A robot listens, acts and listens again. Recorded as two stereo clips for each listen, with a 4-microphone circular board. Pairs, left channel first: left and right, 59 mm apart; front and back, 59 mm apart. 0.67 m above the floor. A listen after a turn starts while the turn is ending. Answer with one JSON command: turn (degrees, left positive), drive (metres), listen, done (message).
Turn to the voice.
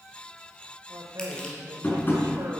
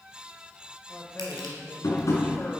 {"turn": -65}
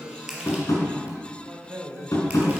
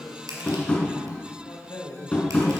{"turn": -30}
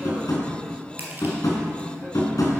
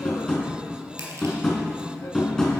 {"listen": true}
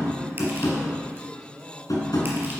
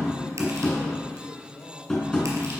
{"turn": -20}
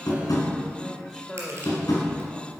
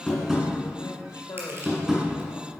{"done": "Facing the man speaking, 1 to 2 m away."}